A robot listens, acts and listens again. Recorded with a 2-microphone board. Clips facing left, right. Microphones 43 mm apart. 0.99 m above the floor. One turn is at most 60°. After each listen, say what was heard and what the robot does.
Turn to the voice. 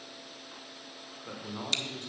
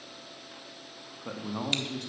The man speaking: about 75° right or 105° right. Turn 60° right.
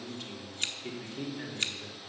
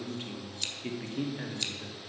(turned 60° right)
So it is at 30° right. Turn 30° right.
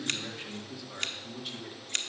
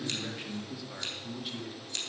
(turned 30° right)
Found it: a man speaking, straight ahead, 1 to 2 m away.